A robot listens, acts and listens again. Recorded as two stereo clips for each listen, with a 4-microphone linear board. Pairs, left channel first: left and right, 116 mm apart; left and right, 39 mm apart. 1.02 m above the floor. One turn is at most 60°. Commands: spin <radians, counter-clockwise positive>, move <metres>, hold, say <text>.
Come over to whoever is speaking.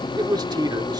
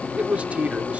spin -0.61
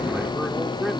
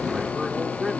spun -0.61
hold
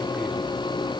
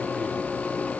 hold
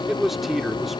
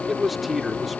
move 1.0
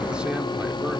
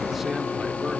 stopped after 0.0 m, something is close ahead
hold
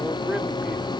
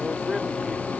hold
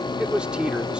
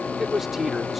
say Blocked. The man speaking is further on, straight ahead.